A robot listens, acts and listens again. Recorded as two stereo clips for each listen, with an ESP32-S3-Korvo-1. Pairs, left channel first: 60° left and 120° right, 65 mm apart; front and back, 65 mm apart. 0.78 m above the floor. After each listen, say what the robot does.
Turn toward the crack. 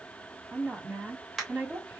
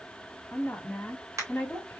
Turn 150° left.
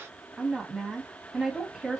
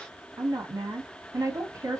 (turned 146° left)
I heard a crack from this way, but can't make it out now.